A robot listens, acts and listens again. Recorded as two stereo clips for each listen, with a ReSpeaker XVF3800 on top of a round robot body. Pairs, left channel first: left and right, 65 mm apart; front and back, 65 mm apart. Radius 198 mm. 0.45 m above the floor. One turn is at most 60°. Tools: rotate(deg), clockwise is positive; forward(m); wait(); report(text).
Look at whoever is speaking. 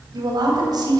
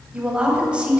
rotate(60)
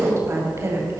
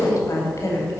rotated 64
rotate(40)
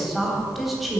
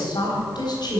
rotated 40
report("Facing the woman speaking, 2 to 4 m away.")